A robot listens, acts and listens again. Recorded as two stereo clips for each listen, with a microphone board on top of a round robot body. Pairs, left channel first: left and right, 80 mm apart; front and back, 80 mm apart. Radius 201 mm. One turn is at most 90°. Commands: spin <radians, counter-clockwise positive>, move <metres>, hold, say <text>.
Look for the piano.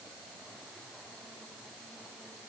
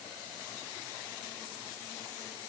hold
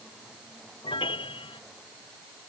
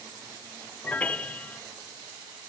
spin 1.31
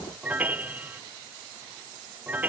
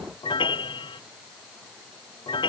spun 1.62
spin -0.35
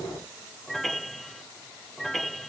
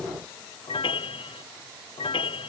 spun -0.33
say Facing the piano.